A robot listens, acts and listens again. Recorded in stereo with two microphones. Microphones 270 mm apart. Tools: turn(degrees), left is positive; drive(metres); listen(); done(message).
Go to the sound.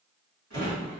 turn(degrees=-60)
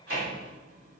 turn(degrees=-60)
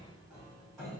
drive(metres=1.0)
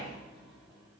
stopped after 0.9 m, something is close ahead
done("I am next to the drawer.")